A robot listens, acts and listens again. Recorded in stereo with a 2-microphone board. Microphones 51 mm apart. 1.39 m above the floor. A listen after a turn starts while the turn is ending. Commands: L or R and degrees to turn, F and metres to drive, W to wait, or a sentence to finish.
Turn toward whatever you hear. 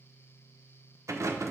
R65
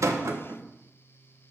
R50
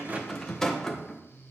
L10
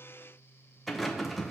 Found it: a rattle, straight ahead.